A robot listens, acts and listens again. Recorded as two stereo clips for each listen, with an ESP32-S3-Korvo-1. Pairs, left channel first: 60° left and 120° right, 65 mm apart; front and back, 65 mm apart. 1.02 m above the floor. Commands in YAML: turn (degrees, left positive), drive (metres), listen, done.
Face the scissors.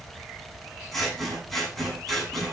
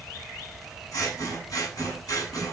turn: -30
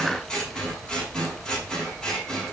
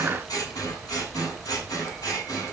turn: -20
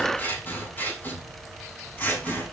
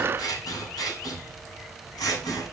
done: "Facing the scissors."